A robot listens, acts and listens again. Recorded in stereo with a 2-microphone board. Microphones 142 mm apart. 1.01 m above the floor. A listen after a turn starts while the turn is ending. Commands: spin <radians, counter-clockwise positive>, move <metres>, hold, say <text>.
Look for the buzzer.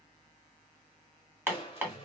hold
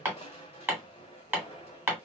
hold
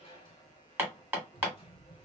say I can't make out a buzzer to turn to.